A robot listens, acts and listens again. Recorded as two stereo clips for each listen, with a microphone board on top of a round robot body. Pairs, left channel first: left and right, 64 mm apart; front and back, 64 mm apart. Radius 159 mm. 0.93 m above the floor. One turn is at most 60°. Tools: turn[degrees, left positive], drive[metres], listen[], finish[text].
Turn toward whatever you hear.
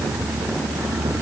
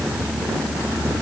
Action: listen[]
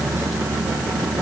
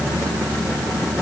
Action: listen[]
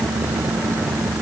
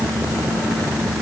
Action: finish[I can't make out anything to turn to.]